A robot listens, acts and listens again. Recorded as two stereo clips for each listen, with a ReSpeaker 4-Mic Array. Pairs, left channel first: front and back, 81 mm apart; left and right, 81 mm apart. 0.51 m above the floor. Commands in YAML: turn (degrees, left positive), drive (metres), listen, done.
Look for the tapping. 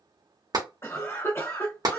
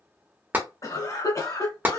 turn: -155
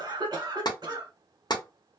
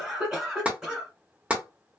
turn: -20
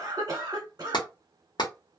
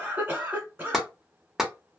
done: "Found it: tapping, straight ahead, under 1 m away."